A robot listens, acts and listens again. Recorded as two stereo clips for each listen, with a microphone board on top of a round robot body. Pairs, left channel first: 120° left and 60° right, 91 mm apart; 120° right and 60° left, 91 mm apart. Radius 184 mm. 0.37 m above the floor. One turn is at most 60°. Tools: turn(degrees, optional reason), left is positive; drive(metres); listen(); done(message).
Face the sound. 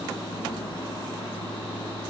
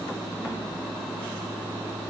listen()
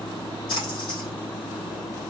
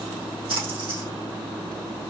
turn(degrees=60, reason="The splash: 85° left.")
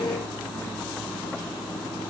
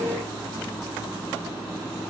turn(degrees=25, reason="Nothing new. It was at 25° left.")
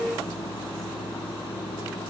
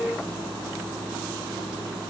done("Facing where the splash came from. I can't hear it now.")